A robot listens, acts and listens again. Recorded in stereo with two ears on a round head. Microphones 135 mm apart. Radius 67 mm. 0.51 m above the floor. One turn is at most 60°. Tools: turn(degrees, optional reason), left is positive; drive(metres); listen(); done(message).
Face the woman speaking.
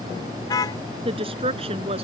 turn(degrees=-40, reason="The woman speaking: about 40° right or 140° right.")
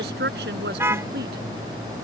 turn(degrees=-60, reason="So it is at 100° right.")
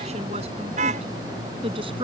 turn(degrees=-35, reason="The woman speaking is now 35° right.")
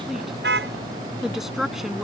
done("Facing the woman speaking.")